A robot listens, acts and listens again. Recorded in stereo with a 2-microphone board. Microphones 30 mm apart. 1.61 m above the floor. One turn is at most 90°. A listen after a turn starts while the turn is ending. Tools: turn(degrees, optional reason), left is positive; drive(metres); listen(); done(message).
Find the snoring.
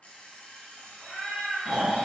turn(degrees=-25, reason="The snoring: about 25° right or 155° right.")
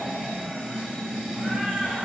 turn(degrees=-90, reason="So it is at 130° right.")
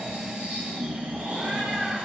turn(degrees=-60, reason="The snoring is now 60° right.")
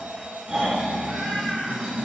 turn(degrees=-20, reason="The snoring is now 20° right.")
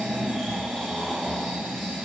done("Found it: snoring, straight ahead, 1 to 2 m away.")